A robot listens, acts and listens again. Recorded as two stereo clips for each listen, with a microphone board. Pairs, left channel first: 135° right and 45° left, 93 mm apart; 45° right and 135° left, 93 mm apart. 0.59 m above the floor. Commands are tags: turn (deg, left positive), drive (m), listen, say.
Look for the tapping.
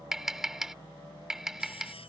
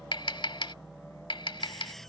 <turn deg="-40"/>
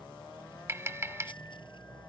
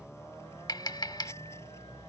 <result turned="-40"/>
<turn deg="-10"/>
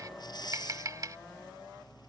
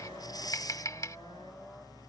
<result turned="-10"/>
<say>Facing the tapping.</say>